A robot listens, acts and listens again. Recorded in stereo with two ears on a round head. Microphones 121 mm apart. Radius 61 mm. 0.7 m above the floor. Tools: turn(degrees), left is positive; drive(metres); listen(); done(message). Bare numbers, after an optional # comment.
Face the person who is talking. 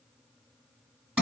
listen()
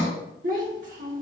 # The child speaking: about 60° right or 120° right.
turn(-60)
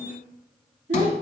# So it is at 55° right.
turn(-55)
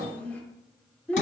# The child speaking is now 10° left.
turn(10)
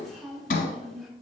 done("Facing the child speaking, 1 to 2 m away.")